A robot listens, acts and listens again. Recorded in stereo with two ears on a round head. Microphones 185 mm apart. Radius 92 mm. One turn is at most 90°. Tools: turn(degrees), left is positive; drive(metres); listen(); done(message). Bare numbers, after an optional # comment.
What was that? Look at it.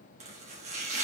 # The chopping: about 35° right or 145° right.
turn(-35)
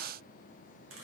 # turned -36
listen()
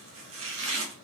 # So it is at 110° right.
turn(-90)
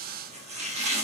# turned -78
# The chopping is now 30° right.
turn(-30)
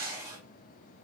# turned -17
# The chopping is now 15° right.
turn(-15)
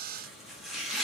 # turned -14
done("Facing the chopping.")